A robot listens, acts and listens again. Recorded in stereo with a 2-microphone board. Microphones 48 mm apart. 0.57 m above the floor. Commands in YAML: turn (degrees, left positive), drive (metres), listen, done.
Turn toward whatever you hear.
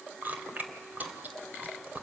turn: -40
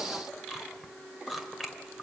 done: "Found it: chewing, straight ahead, 1 to 2 m away."